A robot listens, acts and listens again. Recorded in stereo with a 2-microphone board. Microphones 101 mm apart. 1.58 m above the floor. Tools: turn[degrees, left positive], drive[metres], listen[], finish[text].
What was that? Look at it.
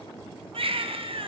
Thought: The baby crying: about 65° right or 115° right.
Action: turn[-65]
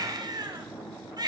Thought: So it is at 45° right.
Action: turn[-45]
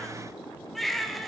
Action: finish[Facing the baby crying.]